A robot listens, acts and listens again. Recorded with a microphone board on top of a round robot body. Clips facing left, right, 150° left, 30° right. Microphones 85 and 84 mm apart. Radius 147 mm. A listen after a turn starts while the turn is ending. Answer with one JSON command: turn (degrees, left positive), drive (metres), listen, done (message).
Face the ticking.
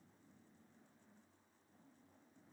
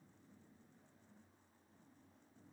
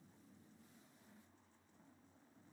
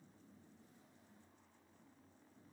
{"listen": true}
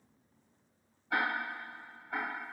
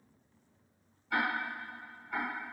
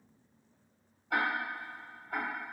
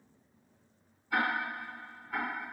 {"turn": 150}
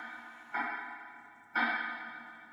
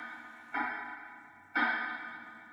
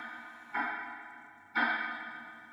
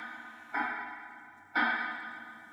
{"done": "Facing the ticking, 1 to 2 m away."}